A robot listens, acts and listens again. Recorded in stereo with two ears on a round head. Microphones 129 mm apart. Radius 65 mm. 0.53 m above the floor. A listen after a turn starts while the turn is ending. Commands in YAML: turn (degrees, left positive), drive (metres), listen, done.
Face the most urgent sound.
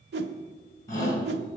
turn: 20
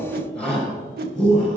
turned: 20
done: "Facing the shout."